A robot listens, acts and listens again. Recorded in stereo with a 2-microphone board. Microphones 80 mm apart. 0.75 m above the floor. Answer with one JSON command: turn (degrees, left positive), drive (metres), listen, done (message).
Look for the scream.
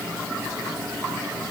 {"listen": true}
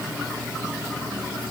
{"listen": true}
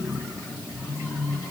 {"done": "I can't make out a scream."}